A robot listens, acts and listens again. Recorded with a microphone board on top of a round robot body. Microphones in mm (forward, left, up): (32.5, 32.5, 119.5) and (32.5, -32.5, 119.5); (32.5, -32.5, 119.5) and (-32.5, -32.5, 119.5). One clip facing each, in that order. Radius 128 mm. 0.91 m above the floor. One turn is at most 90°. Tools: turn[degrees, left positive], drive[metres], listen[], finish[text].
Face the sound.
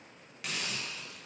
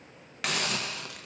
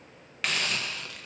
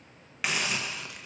Thought: The hiss: 100° right.
Action: turn[-90]
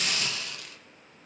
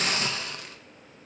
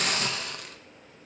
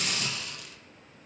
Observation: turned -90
Thought: The hiss is now 35° right.
Action: turn[-35]
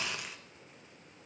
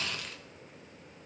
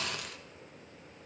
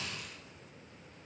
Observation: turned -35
Thought: The hiss is now 15° left.
Action: turn[15]
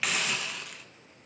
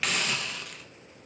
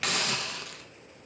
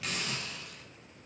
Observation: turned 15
Action: finish[Facing the hiss.]